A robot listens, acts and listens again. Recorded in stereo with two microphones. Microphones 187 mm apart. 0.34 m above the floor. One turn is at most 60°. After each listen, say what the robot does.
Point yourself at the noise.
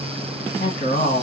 Turn 55° left.
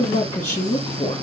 Turn 45° left.
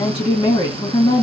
Turn 35° left.
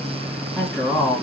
Facing the woman speaking.